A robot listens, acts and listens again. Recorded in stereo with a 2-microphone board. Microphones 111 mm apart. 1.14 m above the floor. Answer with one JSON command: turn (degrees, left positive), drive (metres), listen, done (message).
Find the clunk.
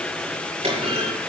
{"turn": -55}
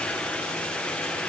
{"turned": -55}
{"listen": true}
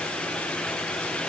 {"done": "I heard a clunk, but can't make it out now. It was about straight ahead or 70° right."}